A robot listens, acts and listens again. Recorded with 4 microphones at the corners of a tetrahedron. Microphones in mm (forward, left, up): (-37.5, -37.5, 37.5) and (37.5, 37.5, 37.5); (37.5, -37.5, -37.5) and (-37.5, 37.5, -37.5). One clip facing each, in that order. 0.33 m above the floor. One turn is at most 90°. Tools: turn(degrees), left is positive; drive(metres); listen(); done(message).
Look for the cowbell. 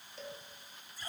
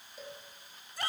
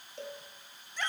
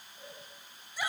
turn(degrees=-40)
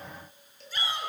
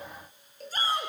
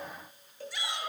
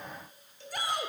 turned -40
done("Facing the cowbell, over 4 m away.")